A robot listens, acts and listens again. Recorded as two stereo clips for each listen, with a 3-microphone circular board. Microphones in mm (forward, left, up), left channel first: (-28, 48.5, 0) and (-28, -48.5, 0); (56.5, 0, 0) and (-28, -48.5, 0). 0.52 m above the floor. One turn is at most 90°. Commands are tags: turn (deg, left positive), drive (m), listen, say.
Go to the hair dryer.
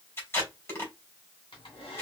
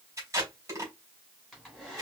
<turn deg="90"/>
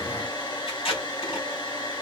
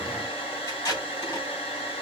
<turn deg="45"/>
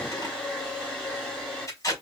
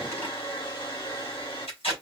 <drive m="1.0"/>
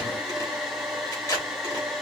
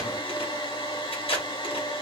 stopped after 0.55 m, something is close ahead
<say>Something is in my way. I am facing the hair dryer but have not reached it.</say>